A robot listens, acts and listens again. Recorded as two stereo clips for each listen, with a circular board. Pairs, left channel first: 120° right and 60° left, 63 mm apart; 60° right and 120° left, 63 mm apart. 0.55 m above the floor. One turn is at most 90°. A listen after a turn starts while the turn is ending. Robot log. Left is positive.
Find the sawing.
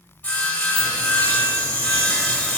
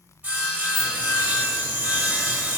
note: The sawing: 175° left.
cmd yaw +90
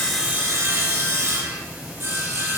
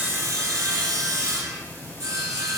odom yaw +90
note: The sawing is now 95° left.
cmd yaw +90
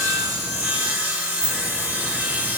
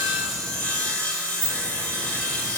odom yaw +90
end: Found it: sawing, straight ahead.